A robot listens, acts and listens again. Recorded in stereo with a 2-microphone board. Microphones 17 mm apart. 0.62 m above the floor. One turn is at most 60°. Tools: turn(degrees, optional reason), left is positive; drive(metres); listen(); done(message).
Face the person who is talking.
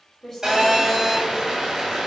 turn(degrees=20, reason="The woman speaking: about 20° left or 160° left.")
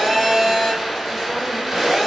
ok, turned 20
listen()
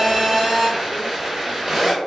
listen()
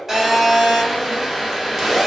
done("I heard a woman speaking, but can't make it out now. It was about straight ahead or 140° left.")